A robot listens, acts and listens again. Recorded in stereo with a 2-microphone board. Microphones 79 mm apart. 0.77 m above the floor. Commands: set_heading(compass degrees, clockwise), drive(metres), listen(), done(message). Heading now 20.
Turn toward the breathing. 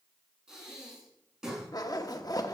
set_heading(50)
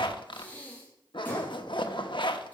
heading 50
set_heading(30)
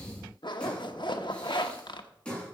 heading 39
set_heading(29)
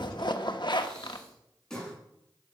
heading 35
set_heading(25)
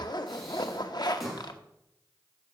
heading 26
done("Facing the breathing.")